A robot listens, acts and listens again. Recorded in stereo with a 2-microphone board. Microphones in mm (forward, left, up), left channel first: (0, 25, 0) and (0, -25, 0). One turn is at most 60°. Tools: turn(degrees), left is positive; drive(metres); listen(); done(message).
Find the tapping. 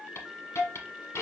listen()
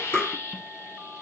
turn(degrees=40)
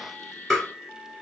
done("Found it: tapping, straight ahead, 2 to 4 m away.")